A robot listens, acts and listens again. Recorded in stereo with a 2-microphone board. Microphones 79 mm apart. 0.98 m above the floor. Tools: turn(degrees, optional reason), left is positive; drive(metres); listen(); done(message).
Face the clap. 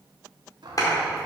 turn(degrees=50, reason="The clap: about 50° left or 130° left.")
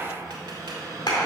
turn(degrees=80, reason="So it is at 80° left.")
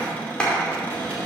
turn(degrees=15, reason="The clap is now 15° left.")
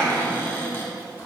done("Facing the clap.")